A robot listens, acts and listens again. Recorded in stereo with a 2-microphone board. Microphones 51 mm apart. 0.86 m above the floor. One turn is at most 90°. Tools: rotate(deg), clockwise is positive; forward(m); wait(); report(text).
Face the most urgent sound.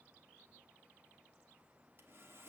wait()
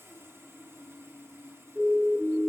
rotate(30)
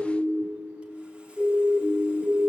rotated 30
rotate(90)
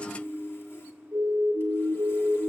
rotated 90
rotate(65)
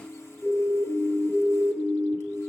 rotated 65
report("Found it: a siren, straight ahead, 2 to 4 m away.")